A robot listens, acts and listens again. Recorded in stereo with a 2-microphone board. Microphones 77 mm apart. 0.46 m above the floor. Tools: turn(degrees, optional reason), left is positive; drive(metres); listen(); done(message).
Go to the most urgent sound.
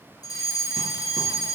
turn(degrees=55, reason="The fire alarm: about 55° left or 125° left.")
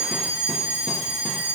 turn(degrees=50, reason="So it is at 50° left.")
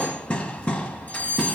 turn(degrees=25, reason="The fire alarm is now 25° left.")
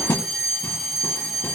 drive(metres=1.0)
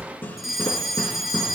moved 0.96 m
drive(metres=1.0)
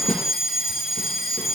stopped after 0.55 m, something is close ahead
done("I am next to the fire alarm.")